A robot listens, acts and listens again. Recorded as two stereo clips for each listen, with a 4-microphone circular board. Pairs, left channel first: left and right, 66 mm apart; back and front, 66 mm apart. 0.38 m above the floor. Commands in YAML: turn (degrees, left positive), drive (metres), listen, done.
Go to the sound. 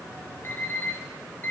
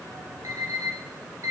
turn: 35
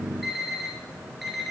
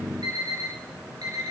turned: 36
drive: 1.0
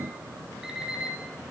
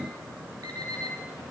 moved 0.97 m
turn: -10
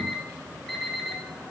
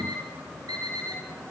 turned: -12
drive: 1.0
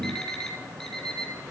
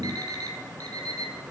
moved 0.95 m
turn: 10
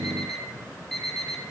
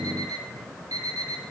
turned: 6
drive: 1.0
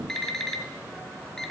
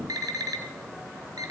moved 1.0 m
drive: 1.0
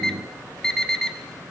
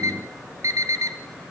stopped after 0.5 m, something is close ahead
turn: 10
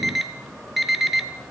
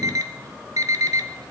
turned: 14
done: "Arrived at the alarm clock, straight ahead."